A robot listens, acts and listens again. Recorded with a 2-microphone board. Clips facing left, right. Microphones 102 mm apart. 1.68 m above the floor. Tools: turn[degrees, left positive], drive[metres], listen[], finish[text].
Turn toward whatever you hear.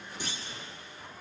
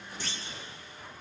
Thought: The clunk: about 15° left or 165° left.
Action: turn[15]
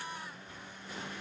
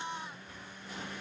Action: listen[]
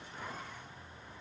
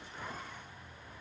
Action: finish[I heard a clunk, but can't make it out now. It was about straight ahead or 150° left.]